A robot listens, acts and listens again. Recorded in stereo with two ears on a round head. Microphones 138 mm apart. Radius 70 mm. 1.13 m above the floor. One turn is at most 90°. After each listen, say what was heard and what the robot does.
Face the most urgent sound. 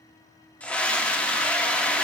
Turn 30° left.
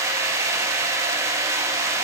So it is at 20° right. Turn 20° right.
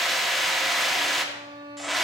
Found it: a scream, straight ahead.